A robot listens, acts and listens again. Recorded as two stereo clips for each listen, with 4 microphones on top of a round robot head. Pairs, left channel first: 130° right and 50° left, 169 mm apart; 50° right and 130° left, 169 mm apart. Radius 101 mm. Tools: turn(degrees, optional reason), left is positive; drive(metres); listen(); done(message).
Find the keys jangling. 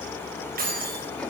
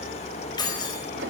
turn(degrees=15, reason="The keys jangling: 15° left.")
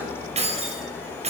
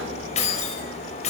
done("Found it: keys jangling, straight ahead.")